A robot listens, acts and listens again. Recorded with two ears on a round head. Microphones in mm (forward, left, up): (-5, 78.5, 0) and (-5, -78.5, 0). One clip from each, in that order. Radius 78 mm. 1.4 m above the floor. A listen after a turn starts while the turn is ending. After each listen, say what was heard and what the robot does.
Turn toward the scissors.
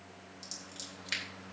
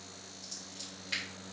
The scissors: about 45° left or 135° left. Turn 45° left.
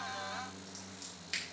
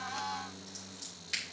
Found it: scissors, straight ahead, 2 to 4 m away.